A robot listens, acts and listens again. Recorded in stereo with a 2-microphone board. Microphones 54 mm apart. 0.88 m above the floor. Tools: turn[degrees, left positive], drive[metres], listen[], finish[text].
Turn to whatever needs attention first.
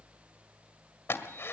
Action: listen[]
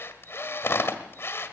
Action: listen[]
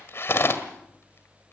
Action: finish[I can't make out anything urgent to turn to.]